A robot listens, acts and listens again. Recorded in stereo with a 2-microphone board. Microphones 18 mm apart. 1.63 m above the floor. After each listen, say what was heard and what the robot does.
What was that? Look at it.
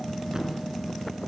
The thud: about 35° right or 145° right. Turn 35° right.
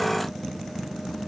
Keep listening.
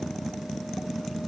I heard a thud, but can't make it out now. It was about straight ahead or 110° right.